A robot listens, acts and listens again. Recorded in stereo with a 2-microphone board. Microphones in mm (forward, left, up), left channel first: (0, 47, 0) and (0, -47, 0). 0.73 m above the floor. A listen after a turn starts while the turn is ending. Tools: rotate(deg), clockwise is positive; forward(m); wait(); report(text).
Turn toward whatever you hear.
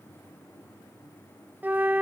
rotate(20)
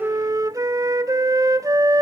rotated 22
rotate(135)
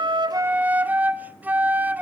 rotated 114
rotate(20)
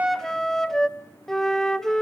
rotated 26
report("Facing the flute.")